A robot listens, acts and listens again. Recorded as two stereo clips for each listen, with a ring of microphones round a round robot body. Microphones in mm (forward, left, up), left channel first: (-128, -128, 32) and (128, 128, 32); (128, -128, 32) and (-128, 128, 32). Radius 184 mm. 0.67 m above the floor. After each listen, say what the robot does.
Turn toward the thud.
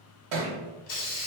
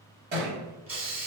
Turn 70° left.
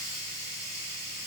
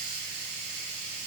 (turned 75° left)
I heard a thud from this way, but can't make it out now.